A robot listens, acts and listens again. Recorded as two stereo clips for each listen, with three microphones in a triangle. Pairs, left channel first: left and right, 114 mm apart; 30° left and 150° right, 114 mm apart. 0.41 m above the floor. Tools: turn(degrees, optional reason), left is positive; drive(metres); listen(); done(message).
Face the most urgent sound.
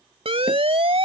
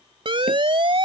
turn(degrees=-115, reason="The siren: 115° right.")
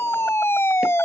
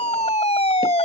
turn(degrees=25, reason="The siren is now 25° left.")
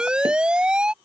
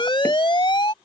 turn(degrees=-10, reason="The siren is now 10° right.")
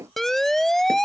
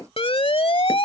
done("Found it: a siren, straight ahead.")